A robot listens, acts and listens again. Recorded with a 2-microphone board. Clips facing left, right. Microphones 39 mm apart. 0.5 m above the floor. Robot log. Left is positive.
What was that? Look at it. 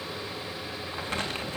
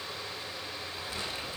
note: The crumpling: about 55° left or 125° left.
cmd yaw +55
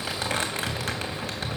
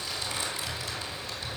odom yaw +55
note: So it is at 65° left.
cmd yaw +65
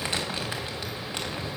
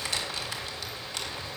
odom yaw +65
note: The crumpling is now 25° left.
cmd yaw +25
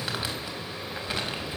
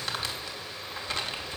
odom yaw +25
note: The crumpling is now 10° left.
cmd yaw +10
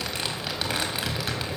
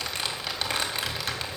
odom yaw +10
end: Facing the crumpling, 2 to 4 m away.